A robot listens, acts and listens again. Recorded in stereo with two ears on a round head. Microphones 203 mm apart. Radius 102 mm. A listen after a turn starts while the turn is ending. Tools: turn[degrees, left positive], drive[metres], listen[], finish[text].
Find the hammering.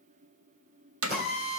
Thought: The hammering: about 70° right or 110° right.
Action: turn[-70]
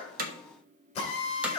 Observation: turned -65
Action: listen[]
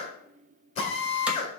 Action: listen[]
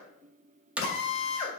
Action: finish[Facing the hammering.]